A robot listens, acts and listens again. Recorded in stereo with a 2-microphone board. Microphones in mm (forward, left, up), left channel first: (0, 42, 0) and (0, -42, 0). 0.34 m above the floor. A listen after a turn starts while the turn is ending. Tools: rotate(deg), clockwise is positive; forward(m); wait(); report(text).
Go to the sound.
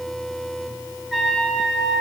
rotate(-30)
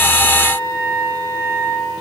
rotate(30)
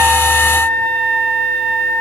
rotate(-20)
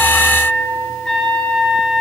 forward(1.0)
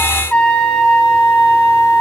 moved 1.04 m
rotate(-15)
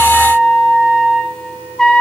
forward(1.0)
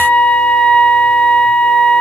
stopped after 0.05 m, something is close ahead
rotate(-10)
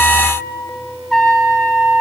report("Arrived at the trumpet, straight ahead.")